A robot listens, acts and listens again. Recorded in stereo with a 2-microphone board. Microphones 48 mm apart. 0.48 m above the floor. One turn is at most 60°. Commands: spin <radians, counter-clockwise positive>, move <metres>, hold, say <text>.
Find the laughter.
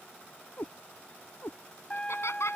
spin 1.05
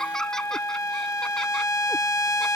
spin 0.17
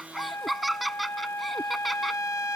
say Found it: laughter, straight ahead.